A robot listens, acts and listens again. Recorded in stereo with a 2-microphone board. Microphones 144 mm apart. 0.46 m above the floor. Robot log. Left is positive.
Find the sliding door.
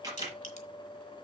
cmd idle
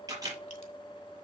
cmd idle
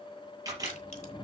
cmd yaw +30
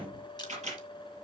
note: So it is at 25° right.
cmd yaw -25
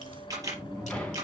end: Facing the sliding door.